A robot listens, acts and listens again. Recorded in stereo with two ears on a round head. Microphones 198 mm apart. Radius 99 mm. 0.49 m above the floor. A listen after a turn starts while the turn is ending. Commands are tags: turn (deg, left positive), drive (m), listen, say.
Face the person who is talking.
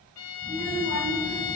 <turn deg="-20"/>
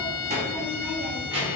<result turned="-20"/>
<turn deg="-25"/>
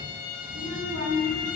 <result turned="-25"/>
<turn deg="-135"/>
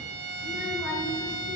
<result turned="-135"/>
<say>Facing the child speaking, over 4 m away.</say>